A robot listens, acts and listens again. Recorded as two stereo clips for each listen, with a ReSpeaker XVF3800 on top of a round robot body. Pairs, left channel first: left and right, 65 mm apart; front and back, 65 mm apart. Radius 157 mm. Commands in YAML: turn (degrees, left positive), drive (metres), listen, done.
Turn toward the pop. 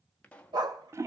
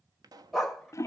turn: 160
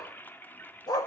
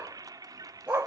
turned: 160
done: "Facing where the pop came from. I can't hear it now."